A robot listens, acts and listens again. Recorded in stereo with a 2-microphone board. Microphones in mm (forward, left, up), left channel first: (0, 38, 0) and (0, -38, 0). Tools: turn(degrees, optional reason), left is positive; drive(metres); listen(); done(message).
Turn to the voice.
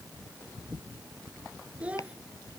turn(degrees=-15, reason="The child speaking: about 15° right or 165° right.")
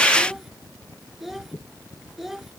done("Facing the child speaking.")